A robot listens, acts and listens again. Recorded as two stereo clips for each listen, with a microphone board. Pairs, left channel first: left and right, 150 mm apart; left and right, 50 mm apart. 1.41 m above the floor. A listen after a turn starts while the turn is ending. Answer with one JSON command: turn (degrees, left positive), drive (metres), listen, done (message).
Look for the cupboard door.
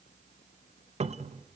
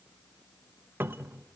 {"turn": -45}
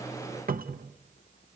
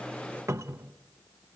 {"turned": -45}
{"turn": -85}
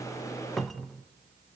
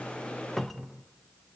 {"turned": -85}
{"done": "Found it: a cupboard door, straight ahead."}